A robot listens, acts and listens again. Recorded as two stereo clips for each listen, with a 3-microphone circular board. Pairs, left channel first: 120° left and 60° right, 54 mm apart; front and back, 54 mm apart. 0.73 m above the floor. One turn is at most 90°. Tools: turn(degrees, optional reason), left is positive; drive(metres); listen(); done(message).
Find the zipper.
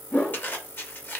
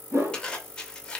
turn(degrees=70, reason="The zipper: 70° left.")
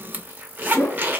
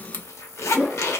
turn(degrees=-10, reason="The zipper is now 10° right.")
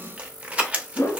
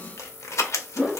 done("Found it: a zipper, straight ahead, under 1 m away.")